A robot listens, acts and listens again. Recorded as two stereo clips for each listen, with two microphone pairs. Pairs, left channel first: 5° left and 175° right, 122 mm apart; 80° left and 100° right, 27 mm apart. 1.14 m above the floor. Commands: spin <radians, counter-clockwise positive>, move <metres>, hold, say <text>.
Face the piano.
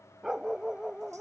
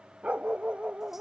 hold
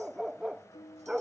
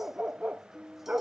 spin -0.70
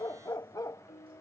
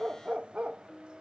say Facing the piano.